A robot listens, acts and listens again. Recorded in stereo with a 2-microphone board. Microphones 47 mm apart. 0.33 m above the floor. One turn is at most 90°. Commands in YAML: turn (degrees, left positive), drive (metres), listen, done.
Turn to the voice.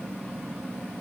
listen: true
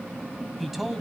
turn: -30
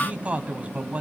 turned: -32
turn: -90
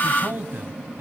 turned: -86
turn: -55
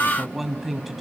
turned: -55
done: "Facing the man speaking, 1 to 2 m away."